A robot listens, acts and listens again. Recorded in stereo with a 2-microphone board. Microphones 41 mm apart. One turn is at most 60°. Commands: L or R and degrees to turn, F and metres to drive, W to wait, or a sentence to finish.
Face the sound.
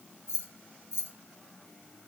L60
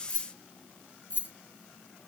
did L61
L50
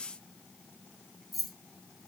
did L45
Facing the keys jangling.